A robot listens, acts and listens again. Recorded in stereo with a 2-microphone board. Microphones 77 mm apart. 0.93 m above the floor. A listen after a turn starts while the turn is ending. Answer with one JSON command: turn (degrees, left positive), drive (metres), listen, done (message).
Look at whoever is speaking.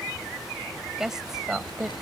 {"turn": -30}
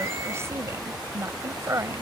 {"turn": -145}
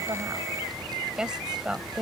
{"turn": -10}
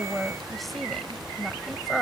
{"done": "Found it: a woman speaking, straight ahead."}